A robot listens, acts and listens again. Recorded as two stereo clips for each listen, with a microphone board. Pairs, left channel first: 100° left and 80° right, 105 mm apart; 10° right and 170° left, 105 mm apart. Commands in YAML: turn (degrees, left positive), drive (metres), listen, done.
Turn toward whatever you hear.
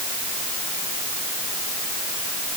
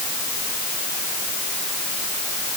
listen: true
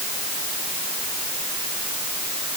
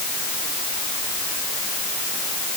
listen: true
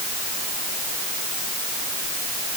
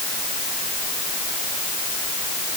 done: "I can't make out anything to turn to."